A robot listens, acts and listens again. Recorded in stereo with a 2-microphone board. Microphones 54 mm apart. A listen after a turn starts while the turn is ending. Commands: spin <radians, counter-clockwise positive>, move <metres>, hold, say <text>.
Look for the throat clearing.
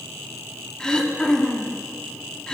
spin 0.52
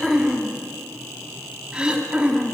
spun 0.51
spin -0.35
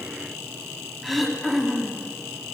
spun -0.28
say Facing the throat clearing.